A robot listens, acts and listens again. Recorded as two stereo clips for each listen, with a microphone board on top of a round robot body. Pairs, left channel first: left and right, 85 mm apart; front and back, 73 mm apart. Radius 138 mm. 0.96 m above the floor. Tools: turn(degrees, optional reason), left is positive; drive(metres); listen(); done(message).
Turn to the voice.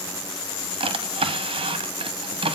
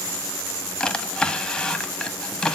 listen()
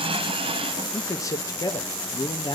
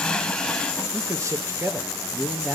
turn(degrees=115, reason="The man speaking: 115° left.")
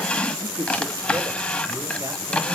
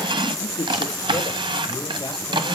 turn(degrees=-25, reason="The man speaking is now 25° right.")
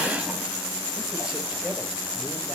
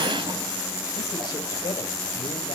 listen()
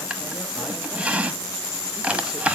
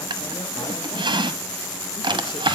listen()
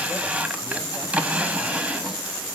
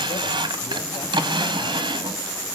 done("Facing where the man speaking came from. I can't hear it now.")